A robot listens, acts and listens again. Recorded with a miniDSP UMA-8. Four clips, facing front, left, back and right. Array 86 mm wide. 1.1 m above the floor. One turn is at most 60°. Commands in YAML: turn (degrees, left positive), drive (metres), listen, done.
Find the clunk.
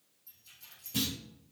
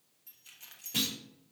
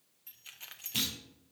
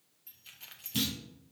turn: 60
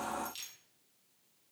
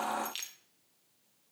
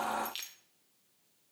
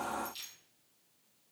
turn: 30
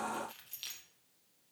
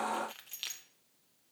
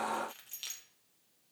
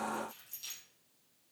done: "I heard a clunk from this way, but can't make it out now."